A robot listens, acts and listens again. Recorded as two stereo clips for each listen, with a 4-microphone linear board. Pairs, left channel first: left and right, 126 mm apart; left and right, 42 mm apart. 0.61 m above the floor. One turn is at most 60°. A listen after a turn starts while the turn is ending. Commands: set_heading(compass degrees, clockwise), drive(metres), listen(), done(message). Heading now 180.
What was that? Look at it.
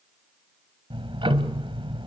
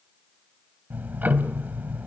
set_heading(225)
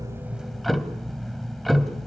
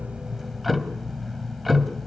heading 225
done("Found it: ticking, straight ahead.")